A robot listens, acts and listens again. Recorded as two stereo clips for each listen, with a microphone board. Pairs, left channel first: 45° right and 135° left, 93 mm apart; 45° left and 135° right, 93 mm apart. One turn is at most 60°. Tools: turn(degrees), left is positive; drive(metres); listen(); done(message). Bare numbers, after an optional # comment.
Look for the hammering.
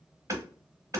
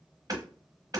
# The hammering: 175° right.
turn(-60)
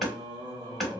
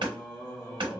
# The hammering is now 135° right.
turn(-60)
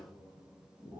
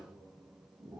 # Nothing new. It was at 75° right.
turn(-60)
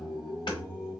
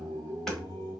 # Nothing new. It was at 15° right.
turn(-15)
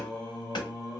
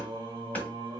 # The hammering is now 25° right.
turn(-25)
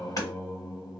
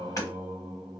done("Found it: hammering, straight ahead.")